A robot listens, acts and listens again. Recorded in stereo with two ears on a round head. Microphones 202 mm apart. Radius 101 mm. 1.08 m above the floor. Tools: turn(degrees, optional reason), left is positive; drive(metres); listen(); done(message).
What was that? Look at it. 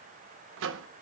turn(degrees=-60, reason="The microwave: about 60° right or 120° right.")
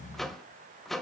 done("Facing the microwave, under 1 m away.")